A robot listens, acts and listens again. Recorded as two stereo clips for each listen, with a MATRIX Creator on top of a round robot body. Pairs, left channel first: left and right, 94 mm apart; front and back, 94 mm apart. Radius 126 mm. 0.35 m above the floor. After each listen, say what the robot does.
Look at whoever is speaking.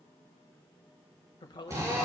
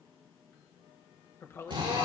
Turn 60° left.
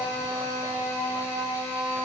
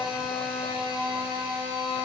Keep listening.
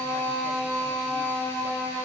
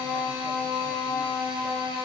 Keep listening.
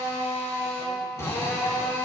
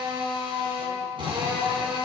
Facing where the woman speaking came from. I can't hear it now.